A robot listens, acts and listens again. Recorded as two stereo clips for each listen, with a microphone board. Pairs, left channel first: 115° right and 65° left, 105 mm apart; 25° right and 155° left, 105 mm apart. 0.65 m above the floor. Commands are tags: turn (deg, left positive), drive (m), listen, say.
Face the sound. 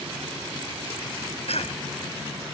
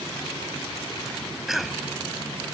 <turn deg="-115"/>
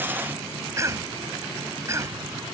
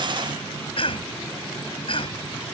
<say>Found it: a cough, straight ahead.</say>